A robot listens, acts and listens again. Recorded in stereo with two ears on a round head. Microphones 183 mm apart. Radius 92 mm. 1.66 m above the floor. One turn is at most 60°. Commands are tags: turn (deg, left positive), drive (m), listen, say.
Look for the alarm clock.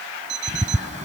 <turn deg="-60"/>
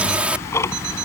<listen/>
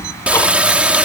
<listen/>
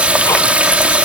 <say>I heard an alarm clock, but can't make it out now. It was about straight ahead or 60° right.</say>